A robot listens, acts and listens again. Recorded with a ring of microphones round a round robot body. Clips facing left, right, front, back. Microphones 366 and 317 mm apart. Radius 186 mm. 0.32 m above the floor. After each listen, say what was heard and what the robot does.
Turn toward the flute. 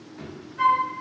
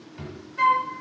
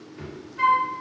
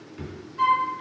The flute: 95° right. Turn 95° right.
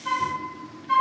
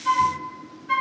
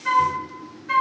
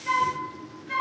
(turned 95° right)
The flute is now 10° right. Turn 10° right.
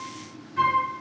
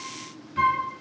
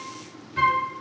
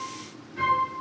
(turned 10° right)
Found it: a flute, straight ahead.